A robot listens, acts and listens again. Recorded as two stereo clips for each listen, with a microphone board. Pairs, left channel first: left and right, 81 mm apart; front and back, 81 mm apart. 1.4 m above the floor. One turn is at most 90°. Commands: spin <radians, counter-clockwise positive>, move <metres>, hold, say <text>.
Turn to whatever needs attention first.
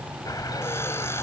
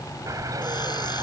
hold
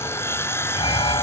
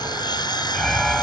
spin 1.48
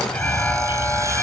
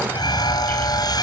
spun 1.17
spin 0.35
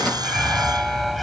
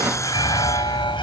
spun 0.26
say Found it: an alarm, straight ahead.